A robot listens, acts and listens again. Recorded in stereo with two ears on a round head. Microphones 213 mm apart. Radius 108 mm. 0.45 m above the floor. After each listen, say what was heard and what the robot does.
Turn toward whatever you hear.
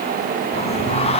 The singing: about 25° left or 155° left. Turn 25° left.
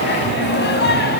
So it is at 135° left. Turn 135° left.
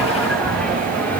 Found it: singing, straight ahead.